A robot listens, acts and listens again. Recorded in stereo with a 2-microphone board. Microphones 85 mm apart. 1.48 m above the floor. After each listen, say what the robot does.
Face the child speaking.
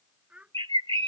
Turn 30° right.
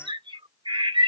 Keep listening.
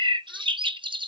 Keep listening.
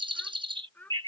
Turn 20° left.
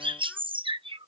Keep listening.
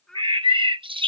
Found it: a child speaking, straight ahead.